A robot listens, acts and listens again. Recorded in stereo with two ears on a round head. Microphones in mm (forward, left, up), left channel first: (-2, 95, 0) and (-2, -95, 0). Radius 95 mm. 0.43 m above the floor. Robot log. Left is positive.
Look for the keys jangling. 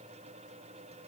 cmd idle
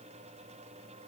cmd idle
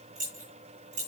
note: The keys jangling: about 35° right or 145° right.
cmd yaw -35
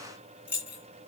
end: Facing the keys jangling, 2 to 4 m away.